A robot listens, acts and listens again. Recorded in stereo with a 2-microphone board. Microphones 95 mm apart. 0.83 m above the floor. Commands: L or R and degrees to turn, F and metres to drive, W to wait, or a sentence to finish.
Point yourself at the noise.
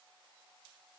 W
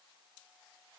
W
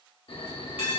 L70
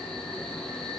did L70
L10
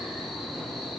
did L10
Found it: a bell, straight ahead, under 1 m away.